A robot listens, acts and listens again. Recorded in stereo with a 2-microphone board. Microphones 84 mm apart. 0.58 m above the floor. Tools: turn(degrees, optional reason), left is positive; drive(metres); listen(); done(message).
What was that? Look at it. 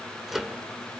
turn(degrees=30)
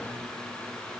listen()
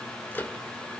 turn(degrees=150, reason="So it is at 150° left.")
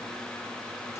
listen()
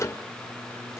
turn(degrees=40, reason="The microwave is now 40° left.")
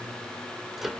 done("Facing the microwave.")